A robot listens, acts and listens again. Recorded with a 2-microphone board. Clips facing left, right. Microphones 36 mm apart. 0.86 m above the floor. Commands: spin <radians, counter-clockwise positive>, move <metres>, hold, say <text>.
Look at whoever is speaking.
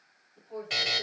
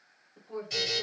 spin -1.31
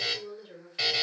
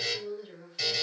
spin -0.52
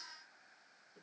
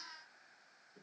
say Facing the woman speaking.